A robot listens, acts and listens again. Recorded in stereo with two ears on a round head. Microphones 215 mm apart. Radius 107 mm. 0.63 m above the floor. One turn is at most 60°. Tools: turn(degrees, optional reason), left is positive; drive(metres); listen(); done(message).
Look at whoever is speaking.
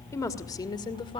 turn(degrees=20, reason="The woman speaking: about 20° left or 160° left.")
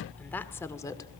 listen()
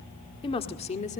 turn(degrees=30, reason="The woman speaking: about 30° left or 150° left.")
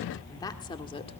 listen()
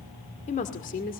turn(degrees=35, reason="The woman speaking: about 35° left or 145° left.")
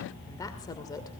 listen()
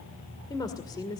turn(degrees=15, reason="The woman speaking: about 15° left or 165° left.")
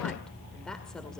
listen()
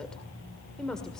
done("Facing the woman speaking, 2 to 4 m away.")